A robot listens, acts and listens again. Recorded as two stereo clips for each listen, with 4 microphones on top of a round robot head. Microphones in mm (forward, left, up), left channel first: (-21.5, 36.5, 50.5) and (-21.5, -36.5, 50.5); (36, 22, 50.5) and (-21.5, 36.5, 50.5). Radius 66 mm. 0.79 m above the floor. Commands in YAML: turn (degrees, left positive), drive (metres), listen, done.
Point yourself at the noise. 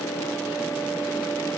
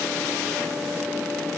listen: true
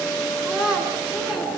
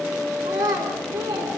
turn: -170
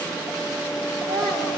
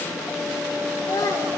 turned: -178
done: "Facing the child speaking, over 4 m away."